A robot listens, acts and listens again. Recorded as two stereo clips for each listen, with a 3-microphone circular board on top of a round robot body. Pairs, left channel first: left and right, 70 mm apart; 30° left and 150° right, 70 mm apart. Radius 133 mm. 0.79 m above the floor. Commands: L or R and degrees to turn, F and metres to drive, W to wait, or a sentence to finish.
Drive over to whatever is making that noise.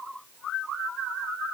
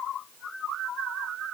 W
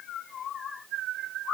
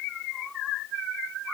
W
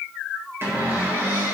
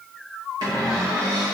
R150
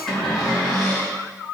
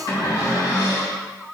F1.0
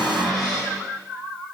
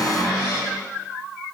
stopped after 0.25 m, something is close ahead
Something is in my way. I am facing the cupboard door but have not reached it.